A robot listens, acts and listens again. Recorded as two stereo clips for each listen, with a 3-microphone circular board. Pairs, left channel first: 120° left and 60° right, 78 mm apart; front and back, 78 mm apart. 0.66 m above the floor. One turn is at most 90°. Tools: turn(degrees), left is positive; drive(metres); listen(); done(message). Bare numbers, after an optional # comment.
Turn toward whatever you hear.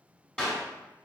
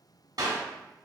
# The clap: 165° right.
turn(-90)
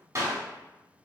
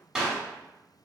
# The clap is now 100° right.
turn(-90)
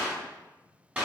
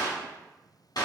# The clap is now 10° left.
turn(10)
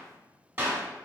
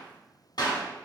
done("Found it: a clap, straight ahead.")